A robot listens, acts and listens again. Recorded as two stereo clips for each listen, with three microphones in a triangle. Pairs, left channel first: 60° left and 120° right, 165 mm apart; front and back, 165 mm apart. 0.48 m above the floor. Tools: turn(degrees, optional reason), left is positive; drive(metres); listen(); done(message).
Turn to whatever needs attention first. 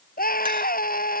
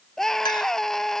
turn(degrees=85, reason="The scream: 85° left.")
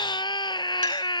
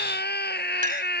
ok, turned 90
done("Found it: a scream, straight ahead.")